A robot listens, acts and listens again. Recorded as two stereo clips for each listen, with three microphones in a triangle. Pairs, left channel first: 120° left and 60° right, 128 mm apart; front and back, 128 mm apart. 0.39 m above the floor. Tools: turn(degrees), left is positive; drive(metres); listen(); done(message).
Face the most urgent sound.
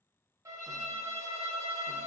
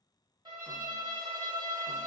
listen()
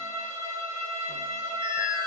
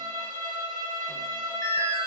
turn(degrees=95)
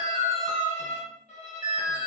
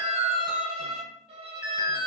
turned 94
done("Found it: an alarm, straight ahead.")